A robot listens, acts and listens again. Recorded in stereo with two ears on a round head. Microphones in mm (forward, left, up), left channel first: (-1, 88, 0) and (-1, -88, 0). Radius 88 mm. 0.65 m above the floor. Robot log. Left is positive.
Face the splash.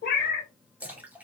cmd yaw -30
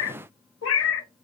cmd idle
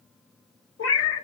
end: I heard a splash, but can't make it out now. It was about 25° left or 145° right.